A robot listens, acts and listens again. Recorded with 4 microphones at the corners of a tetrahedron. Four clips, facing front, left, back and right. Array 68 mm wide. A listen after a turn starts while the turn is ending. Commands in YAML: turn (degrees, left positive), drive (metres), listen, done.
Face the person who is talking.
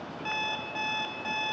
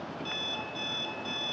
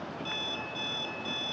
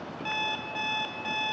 listen: true
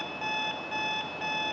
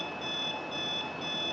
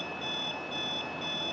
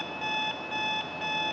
listen: true
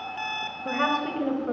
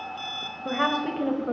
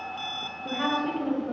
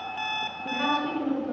turn: 50
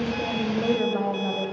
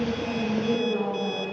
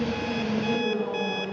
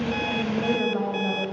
turn: -25
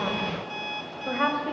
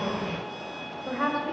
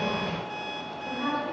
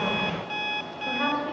turn: 10
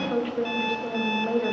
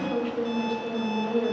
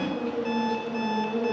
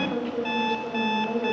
done: "Found it: a woman speaking, straight ahead."